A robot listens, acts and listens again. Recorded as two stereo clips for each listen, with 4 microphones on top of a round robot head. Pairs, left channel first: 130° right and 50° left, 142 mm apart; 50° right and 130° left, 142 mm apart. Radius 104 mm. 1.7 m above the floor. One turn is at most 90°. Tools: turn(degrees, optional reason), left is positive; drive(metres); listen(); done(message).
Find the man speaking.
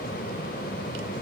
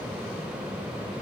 listen()
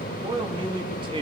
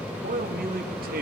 turn(degrees=90, reason="The man speaking: 110° left.")
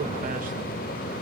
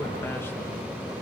turn(degrees=20, reason="Nothing new. It was at 20° left.")
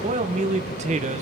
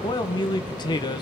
turn(degrees=10, reason="The man speaking is now 10° left.")
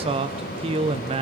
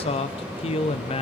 done("Facing the man speaking, 1 to 2 m away.")